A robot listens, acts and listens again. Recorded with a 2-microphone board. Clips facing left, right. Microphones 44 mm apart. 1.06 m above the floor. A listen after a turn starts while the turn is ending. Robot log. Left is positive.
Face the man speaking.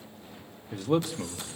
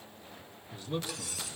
note: The man speaking: about 70° left or 110° left.
cmd yaw +70
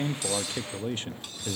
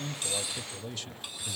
note: So it is at 45° left.
cmd yaw +45
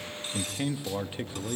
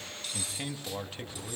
note: The man speaking is now 20° left.
cmd yaw +20
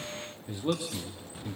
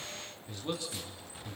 note: The man speaking is now 20° left.
cmd yaw +20
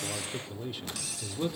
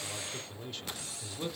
end: Facing the man speaking, 2 to 4 m away.